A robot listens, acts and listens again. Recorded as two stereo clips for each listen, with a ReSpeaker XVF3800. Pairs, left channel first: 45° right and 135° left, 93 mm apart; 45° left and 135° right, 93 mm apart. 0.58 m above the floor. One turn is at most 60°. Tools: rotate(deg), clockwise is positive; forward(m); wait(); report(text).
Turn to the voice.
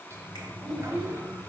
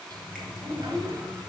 rotate(60)
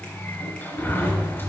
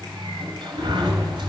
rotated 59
rotate(60)
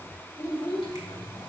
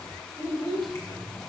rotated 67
report("Facing the child speaking.")